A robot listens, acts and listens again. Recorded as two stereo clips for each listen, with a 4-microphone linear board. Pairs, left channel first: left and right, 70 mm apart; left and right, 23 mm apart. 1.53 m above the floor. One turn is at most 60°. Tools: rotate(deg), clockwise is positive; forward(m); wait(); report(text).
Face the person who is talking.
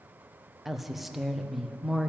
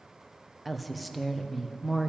rotate(-30)
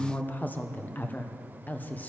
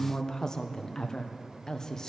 rotate(-60)
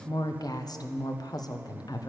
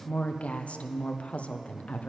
rotate(-60)
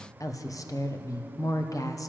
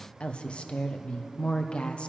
rotate(-55)
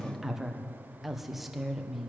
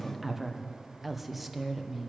report("Found it: a woman speaking, straight ahead, 1 to 2 m away.")